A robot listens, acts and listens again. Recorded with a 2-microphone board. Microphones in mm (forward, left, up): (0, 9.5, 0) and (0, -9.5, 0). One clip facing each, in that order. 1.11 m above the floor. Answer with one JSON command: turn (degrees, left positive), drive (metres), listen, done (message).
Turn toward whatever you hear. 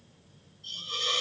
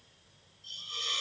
{"turn": 35}
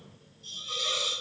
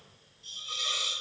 {"done": "Found it: a hiss, straight ahead."}